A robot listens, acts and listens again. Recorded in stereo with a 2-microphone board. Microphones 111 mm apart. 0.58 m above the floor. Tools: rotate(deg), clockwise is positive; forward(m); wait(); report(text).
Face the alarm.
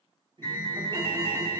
rotate(-25)
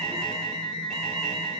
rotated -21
report("Found it: an alarm, straight ahead, 2 to 4 m away.")